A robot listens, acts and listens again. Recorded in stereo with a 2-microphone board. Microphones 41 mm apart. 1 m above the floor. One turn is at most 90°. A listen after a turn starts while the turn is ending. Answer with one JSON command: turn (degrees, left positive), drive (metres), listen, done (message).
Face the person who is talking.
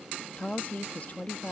{"turn": 40}
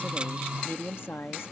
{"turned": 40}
{"turn": 90}
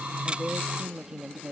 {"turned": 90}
{"turn": -15}
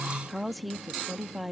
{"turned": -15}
{"done": "Found it: a woman speaking, straight ahead."}